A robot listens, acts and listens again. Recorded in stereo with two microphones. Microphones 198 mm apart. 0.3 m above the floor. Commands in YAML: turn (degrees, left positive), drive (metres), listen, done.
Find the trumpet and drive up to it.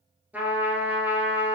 turn: -30
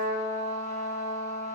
turn: -145
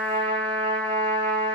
drive: 1.0
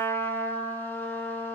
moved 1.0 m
turn: 10
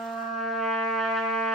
drive: 1.0
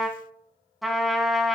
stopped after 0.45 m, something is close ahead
done: "Arrived at the trumpet, straight ahead."